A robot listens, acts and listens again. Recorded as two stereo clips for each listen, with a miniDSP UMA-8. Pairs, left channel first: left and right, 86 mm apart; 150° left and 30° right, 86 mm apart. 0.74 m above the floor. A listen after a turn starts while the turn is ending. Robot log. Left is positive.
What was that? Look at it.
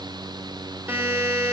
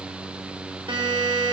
note: The buzzer: 25° right.
cmd yaw -25
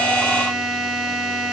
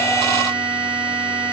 note: The buzzer is now 10° right.
cmd yaw -10
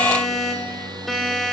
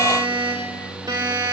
end: Facing the buzzer, 2 to 4 m away.